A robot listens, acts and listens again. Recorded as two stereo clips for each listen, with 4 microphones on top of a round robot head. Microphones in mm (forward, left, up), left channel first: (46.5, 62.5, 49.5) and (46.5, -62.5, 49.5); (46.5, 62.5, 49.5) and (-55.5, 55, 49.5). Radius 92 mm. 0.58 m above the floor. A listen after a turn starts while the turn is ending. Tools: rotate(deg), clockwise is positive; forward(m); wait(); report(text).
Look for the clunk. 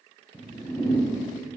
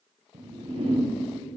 wait()
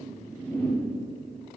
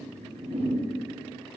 wait()
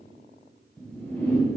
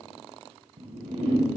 report("I can't make out a clunk to turn to.")